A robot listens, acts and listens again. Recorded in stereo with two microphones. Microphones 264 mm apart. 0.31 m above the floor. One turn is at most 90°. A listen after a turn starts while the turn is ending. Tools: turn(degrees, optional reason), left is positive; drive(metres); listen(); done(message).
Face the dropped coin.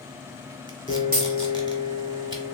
turn(degrees=-30, reason="The dropped coin: about 30° right or 150° right.")
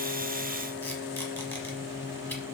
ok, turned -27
listen()
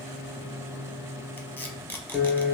done("I heard a dropped coin, but can't make it out now. It was about 5° right or 120° right.")